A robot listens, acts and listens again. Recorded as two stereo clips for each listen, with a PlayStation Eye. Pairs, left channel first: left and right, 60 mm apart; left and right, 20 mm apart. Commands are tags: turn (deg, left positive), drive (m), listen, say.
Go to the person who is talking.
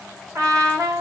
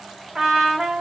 <listen/>
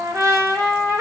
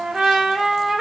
<listen/>
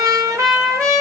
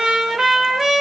<say>I can't make out anyone speaking, only a trumpet.</say>